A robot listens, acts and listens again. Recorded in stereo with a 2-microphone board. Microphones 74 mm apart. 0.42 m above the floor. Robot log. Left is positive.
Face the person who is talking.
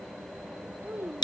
note: The child speaking: about 25° right or 155° right.
cmd yaw -25
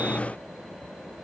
cmd idle
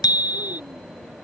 cmd idle
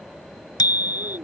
note: So it is at 125° right.
cmd yaw -125
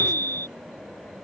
cmd idle
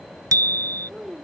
end: Facing the child speaking.